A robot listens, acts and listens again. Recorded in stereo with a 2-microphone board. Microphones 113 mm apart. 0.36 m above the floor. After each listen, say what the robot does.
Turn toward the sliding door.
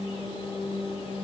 Keep listening.
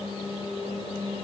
Keep listening.
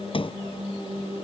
Turn 50° left.
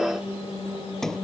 Facing the sliding door.